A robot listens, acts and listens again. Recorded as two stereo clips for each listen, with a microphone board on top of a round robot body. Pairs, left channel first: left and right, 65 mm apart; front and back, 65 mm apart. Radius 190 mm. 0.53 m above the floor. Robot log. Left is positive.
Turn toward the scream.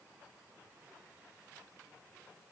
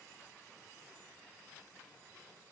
cmd idle
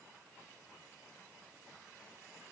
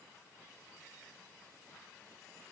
cmd idle
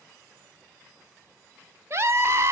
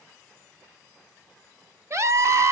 note: The scream: 140° right.
cmd yaw -140
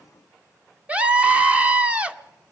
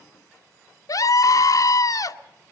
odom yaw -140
note: The scream is now 20° right.
cmd yaw -20
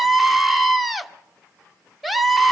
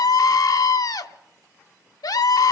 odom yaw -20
end: Facing the scream.